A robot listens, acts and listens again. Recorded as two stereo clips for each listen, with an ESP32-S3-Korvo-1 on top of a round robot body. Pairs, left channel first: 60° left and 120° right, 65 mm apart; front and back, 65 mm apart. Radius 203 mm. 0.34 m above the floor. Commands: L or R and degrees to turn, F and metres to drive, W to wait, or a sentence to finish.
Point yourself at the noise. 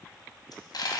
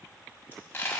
L60
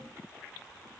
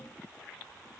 Facing where the dropped coin came from. I can't hear it now.